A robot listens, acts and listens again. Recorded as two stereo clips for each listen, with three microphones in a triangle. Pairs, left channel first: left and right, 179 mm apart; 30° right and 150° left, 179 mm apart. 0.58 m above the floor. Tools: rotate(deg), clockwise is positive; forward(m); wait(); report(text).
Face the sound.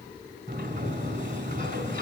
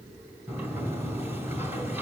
rotate(130)
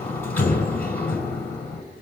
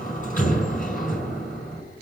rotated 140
rotate(-10)
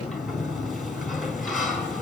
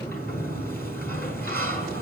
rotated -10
report("Found it: a sliding door, straight ahead.")